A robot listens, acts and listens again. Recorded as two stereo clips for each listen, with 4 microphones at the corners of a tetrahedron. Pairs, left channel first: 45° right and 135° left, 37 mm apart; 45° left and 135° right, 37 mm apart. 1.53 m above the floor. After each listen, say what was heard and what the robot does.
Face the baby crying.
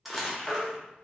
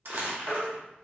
The baby crying: 10° left. Turn 10° left.
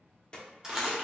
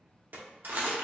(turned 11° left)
Keep listening.
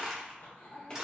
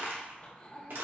Keep listening.
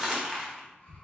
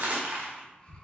I heard a baby crying from this way, but can't make it out now.